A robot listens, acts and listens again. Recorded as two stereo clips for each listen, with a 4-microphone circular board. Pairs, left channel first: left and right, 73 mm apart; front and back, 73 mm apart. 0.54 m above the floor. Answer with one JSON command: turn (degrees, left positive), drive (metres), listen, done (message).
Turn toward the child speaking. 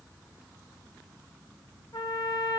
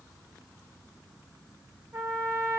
{"listen": true}
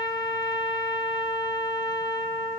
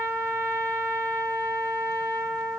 {"listen": true}
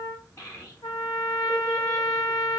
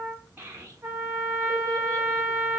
{"turn": 125}
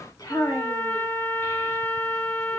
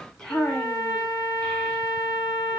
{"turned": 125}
{"turn": 65}
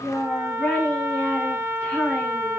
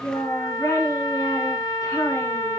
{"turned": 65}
{"done": "Found it: a child speaking, straight ahead, 1 to 2 m away."}